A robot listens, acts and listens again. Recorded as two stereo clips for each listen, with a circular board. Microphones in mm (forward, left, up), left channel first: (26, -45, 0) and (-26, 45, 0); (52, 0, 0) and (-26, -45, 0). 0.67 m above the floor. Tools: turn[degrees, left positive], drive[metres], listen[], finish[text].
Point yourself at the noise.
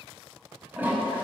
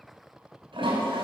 Thought: The toilet flushing: 165° right.
Action: turn[-165]
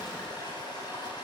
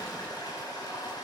Thought: The toilet flushing is now 15° right.
Action: turn[-15]
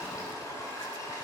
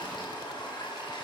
Action: finish[Found it: a toilet flushing, straight ahead.]